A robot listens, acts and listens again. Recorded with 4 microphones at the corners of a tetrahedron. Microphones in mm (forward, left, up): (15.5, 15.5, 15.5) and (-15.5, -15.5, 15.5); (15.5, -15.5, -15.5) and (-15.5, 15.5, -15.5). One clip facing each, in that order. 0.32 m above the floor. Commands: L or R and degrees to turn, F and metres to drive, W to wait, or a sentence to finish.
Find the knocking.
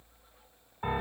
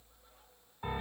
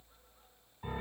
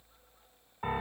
W
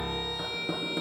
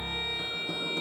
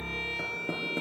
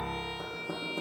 R25
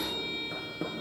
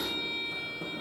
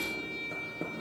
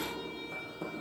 Found it: knocking, straight ahead, 2 to 4 m away.